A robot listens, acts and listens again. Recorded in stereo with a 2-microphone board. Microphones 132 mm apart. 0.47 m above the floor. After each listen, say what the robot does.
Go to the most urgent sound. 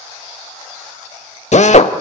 Keep listening.
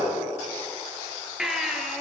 Turn 30° right.
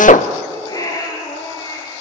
Turn 30° left.
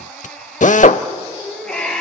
Drive 1.0 m forward.
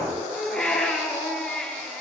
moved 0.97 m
Drive 1.0 m forward.
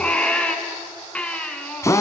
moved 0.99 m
Turn 10° left.
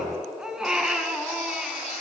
Drive 1.0 m forward.
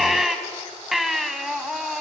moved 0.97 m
Drive 1.0 m forward.
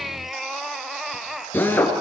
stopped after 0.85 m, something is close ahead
Arrived at the baby crying, straight ahead.